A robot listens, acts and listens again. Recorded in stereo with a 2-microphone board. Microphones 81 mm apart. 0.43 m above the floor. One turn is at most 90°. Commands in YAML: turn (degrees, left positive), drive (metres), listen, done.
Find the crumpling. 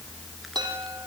listen: true
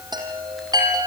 listen: true
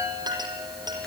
done: "I can't make out crumpling to turn to."